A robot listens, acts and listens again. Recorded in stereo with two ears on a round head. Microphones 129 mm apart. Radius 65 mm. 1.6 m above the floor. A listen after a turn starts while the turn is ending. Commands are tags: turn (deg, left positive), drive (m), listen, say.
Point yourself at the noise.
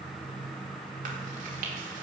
<listen/>
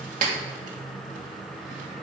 <turn deg="-60"/>
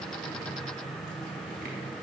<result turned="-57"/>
<listen/>
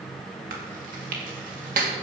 <turn deg="-60"/>
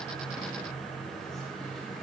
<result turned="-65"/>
<listen/>
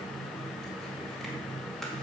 <listen/>
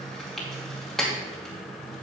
<say>Facing the chewing.</say>